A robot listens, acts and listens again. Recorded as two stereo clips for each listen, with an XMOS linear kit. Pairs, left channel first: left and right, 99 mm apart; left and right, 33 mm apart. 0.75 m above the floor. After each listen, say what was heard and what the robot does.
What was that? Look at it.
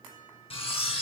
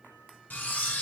Turn 90° left.
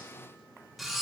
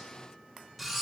Found it: cutlery clinking, straight ahead, under 1 m away.